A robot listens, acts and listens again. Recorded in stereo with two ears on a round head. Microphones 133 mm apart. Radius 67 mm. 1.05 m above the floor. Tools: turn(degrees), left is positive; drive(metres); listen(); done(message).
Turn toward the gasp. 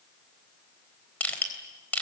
listen()
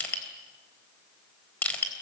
listen()
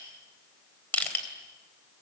done("I can't make out a gasp, only crushing.")